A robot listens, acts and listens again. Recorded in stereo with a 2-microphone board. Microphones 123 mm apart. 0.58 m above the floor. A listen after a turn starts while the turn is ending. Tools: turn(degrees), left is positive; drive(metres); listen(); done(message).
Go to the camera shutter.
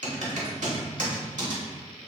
listen()
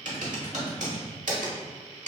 listen()
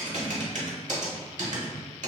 done("I can't make out a camera shutter to turn to.")